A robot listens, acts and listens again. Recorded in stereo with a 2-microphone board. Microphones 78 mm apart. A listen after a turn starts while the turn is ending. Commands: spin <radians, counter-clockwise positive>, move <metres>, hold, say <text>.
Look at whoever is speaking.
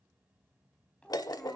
spin 0.52
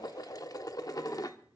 hold
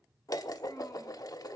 hold
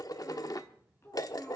spin 2.44
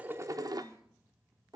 hold
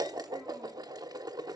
hold
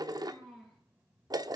spin -0.17
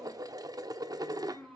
say Facing the child speaking.